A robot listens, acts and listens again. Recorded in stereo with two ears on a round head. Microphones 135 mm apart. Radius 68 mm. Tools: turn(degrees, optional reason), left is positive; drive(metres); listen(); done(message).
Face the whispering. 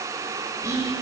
turn(degrees=-20, reason="The whispering: about 20° right or 160° right.")
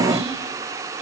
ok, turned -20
listen()
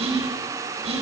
turn(degrees=-135, reason="So it is at 135° right.")
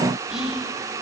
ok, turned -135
done("Found it: whispering, straight ahead.")